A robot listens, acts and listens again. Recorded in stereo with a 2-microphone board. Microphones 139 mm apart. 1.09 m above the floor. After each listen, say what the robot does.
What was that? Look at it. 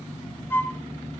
Turn 15° left.
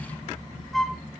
Facing the flute.